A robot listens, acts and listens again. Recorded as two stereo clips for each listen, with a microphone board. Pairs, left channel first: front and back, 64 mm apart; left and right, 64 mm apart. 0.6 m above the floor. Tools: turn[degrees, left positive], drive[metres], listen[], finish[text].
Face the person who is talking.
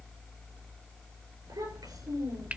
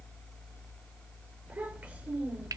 Thought: The child speaking: 160° right.
Action: turn[-160]
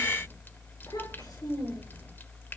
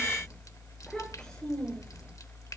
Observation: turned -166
Thought: The child speaking is now 10° left.
Action: turn[10]
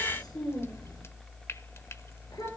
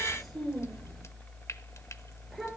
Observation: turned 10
Action: finish[Found it: a child speaking, straight ahead, over 4 m away.]